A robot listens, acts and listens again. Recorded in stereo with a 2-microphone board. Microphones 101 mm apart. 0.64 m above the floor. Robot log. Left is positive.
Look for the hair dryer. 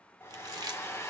note: The hair dryer: about 25° left or 155° left.
cmd yaw +25
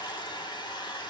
note: So it is at 130° left.
cmd yaw +130
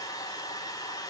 note: The hair dryer is now 40° left.
cmd yaw +40
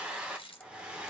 note: The hair dryer is now 10° right.
cmd yaw -10
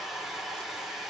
end: Facing the hair dryer.